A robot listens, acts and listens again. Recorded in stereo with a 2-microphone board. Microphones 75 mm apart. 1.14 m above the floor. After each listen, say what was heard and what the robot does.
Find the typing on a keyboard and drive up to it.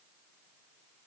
Keep listening.
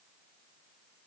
Keep listening.
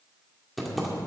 Turn 30° left.
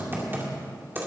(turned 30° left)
So it is at 30° right. Turn 30° right.
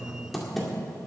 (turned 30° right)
Drive 1.0 m forward.
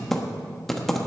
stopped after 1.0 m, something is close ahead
I am next to the typing on a keyboard.